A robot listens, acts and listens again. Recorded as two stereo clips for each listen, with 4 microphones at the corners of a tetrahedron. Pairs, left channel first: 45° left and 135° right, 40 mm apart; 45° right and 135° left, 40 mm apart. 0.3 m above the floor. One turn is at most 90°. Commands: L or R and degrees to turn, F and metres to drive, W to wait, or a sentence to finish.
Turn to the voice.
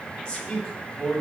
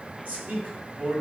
L90
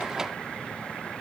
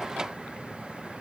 L15
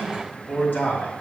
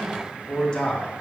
L25
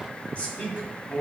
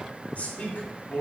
Facing the man speaking.